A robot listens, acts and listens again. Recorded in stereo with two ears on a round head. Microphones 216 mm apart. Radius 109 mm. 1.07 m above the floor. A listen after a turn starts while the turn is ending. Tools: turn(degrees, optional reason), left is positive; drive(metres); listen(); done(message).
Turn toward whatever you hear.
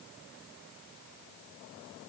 listen()
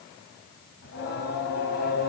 turn(degrees=45, reason="The singing: about 45° left or 135° left.")
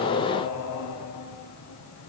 turn(degrees=90, reason="So it is at 90° left.")
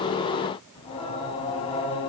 turn(degrees=20, reason="The singing is now 20° left.")
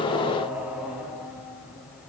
done("Facing the singing, over 4 m away.")